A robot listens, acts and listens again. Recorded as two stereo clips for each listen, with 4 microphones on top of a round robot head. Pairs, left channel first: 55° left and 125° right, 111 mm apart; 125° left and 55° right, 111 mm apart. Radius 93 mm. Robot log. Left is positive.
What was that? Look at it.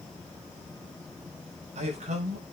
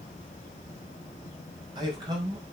note: The man speaking: 105° right.
cmd yaw -105
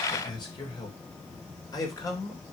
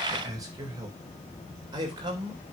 end: Found it: a man speaking, straight ahead, 2 to 4 m away.